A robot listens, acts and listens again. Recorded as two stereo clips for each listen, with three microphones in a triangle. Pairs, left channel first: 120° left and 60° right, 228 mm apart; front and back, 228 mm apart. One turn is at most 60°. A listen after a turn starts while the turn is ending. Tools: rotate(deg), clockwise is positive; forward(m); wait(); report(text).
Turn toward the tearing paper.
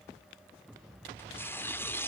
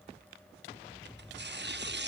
rotate(60)
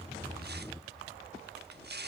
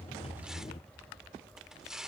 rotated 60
rotate(60)
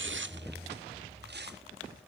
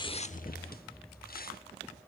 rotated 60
rotate(35)
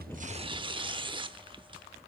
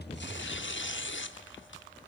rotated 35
report("Found it: tearing paper, straight ahead, under 1 m away.")